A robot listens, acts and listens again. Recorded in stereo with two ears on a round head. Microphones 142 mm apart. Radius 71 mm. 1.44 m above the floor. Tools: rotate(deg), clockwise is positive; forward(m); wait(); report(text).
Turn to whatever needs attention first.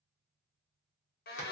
wait()
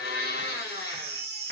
rotate(65)
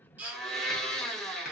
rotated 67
rotate(10)
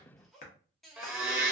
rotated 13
wait()
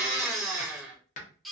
report("Facing the baby crying.")